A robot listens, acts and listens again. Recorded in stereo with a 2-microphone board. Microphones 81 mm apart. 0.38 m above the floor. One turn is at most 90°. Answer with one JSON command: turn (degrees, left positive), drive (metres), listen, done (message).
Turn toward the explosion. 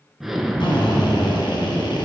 {"turn": -30}
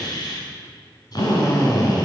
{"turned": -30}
{"listen": true}
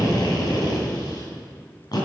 {"done": "I heard an explosion, but can't make it out now. It was about 25° left or 145° right."}